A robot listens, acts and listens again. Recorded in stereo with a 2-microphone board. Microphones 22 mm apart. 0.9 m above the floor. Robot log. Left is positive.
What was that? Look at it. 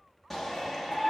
cmd yaw +30
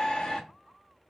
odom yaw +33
note: So it is at 135° left.
cmd yaw +135
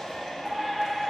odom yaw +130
note: The shout is now 10° left.
cmd yaw +10
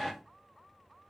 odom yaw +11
end: Found it: a shout, straight ahead.